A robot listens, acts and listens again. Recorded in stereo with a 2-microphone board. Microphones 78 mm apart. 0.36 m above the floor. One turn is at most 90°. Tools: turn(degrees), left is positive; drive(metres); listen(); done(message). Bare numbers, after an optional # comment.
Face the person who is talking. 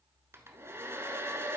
listen()
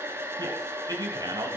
# The man speaking: about 55° right or 125° right.
turn(-55)
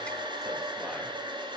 listen()
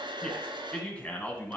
# So it is at 20° left.
turn(20)
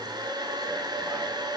listen()
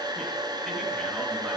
listen()
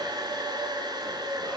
done("Facing where the man speaking came from. I can't hear it now.")